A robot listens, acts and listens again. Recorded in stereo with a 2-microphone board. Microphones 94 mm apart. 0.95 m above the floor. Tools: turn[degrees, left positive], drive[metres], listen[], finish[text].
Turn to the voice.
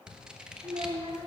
Action: turn[-90]
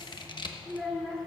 Action: finish[Facing the child speaking.]